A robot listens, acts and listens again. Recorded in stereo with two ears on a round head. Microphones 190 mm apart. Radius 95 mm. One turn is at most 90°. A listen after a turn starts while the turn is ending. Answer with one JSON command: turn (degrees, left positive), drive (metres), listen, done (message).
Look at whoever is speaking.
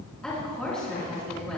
{"turn": 30}
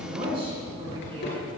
{"turn": -30}
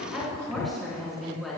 {"done": "Found it: a woman speaking, straight ahead."}